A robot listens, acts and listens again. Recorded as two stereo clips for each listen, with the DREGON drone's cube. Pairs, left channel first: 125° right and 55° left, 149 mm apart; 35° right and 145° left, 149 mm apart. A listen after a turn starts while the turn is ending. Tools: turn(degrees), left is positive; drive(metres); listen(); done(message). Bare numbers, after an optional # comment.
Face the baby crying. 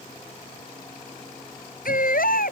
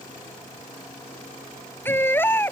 # The baby crying: 110° right.
turn(-110)
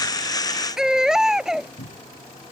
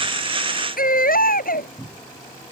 # The baby crying is now 30° right.
turn(-30)
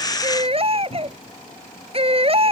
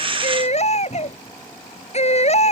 done("Found it: a baby crying, straight ahead.")